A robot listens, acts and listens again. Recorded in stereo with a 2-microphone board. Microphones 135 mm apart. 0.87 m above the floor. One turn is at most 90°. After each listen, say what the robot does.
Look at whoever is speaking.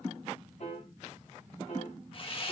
Keep listening.
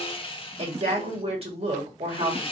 Turn 45° right.
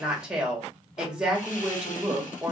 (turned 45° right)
Found it: a woman speaking, straight ahead, 1 to 2 m away.